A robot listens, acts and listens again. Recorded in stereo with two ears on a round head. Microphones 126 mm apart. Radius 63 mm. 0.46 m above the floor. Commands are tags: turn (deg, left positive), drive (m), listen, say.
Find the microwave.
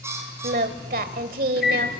<turn deg="90"/>
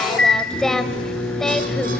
<say>Facing the microwave, over 4 m away.</say>